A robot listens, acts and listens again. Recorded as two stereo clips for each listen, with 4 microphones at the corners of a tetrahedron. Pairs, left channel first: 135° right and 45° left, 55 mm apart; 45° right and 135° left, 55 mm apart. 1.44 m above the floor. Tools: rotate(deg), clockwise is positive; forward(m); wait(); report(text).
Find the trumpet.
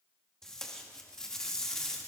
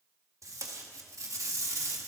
wait()
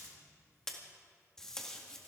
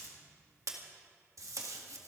wait()
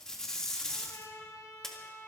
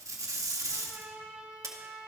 rotate(160)
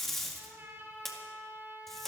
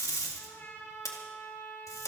report("Found it: a trumpet, straight ahead, over 4 m away.")